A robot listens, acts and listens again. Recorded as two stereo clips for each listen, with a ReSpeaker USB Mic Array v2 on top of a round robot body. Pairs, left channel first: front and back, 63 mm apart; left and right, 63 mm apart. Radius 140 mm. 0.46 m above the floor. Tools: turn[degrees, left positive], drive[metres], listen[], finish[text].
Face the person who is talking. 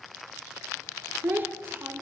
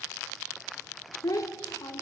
Thought: The child speaking: 125° left.
Action: turn[125]
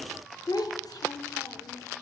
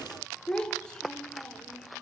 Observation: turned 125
Thought: The child speaking is now 10° left.
Action: turn[10]
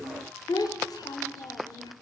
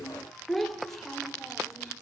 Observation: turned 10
Action: finish[Found it: a child speaking, straight ahead.]